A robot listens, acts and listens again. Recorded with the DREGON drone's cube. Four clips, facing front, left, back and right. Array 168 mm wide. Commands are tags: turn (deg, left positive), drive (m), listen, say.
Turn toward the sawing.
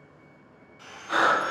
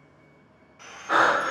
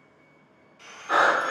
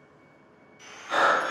<turn deg="70"/>
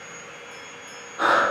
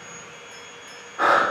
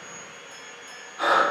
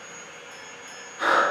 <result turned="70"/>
<say>Found it: sawing, straight ahead.</say>